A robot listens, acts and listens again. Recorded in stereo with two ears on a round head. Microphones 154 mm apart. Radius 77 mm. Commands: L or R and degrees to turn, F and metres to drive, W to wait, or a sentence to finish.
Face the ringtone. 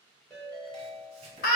L30
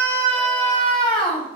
W
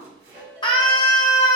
R25
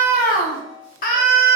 Found it: a ringtone, straight ahead, 1 to 2 m away.